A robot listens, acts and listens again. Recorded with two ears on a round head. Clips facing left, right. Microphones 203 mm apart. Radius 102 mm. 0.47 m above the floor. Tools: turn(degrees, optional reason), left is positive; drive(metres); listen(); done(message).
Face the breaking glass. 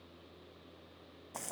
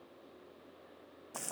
listen()
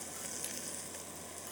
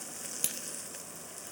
turn(degrees=-65, reason="The breaking glass: about 65° right or 115° right.")
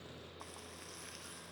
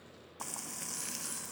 listen()
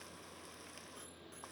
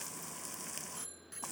done("I heard breaking glass, but can't make it out now. It was about straight ahead or 50° right.")